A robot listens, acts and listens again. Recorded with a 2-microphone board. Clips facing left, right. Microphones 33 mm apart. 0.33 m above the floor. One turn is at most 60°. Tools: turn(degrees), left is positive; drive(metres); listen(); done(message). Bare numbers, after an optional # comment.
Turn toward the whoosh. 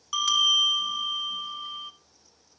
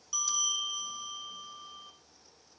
listen()
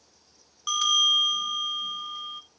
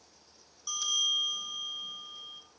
listen()
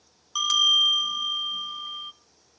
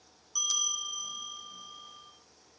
done("I can't make out a whoosh to turn to.")